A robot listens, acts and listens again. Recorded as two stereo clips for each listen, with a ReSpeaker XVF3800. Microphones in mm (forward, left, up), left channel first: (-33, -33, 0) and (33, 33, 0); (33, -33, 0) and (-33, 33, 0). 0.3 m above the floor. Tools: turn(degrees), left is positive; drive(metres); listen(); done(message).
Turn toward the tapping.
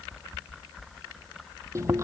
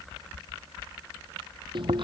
listen()
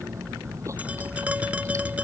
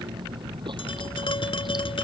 turn(degrees=-30)
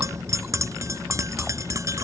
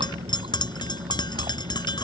turn(degrees=-10)
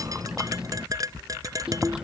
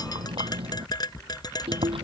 done("Found it: tapping, straight ahead.")